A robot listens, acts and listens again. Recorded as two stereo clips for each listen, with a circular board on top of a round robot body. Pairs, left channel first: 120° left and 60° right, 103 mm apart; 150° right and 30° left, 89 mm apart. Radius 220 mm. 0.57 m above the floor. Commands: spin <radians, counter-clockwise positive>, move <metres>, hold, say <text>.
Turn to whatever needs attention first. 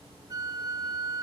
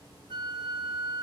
hold
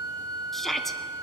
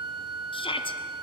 spin -2.71
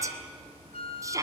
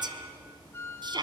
say Found it: a shout, straight ahead.